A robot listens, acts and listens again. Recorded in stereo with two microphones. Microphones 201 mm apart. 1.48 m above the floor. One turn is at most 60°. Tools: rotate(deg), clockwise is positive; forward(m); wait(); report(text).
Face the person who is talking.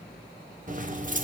wait()
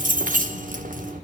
wait()
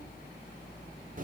report("I can't make out anyone speaking, only keys jangling.")